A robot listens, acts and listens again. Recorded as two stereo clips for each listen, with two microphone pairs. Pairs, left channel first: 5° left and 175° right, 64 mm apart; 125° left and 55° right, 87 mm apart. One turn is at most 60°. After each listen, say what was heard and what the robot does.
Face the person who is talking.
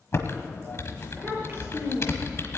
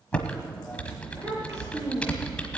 The child speaking: 110° right. Turn 60° right.
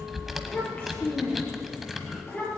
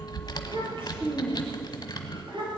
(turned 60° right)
The child speaking is now 60° right. Turn 60° right.
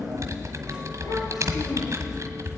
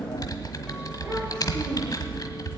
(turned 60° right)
Keep listening.
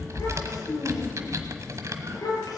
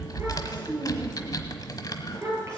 Facing the child speaking, over 4 m away.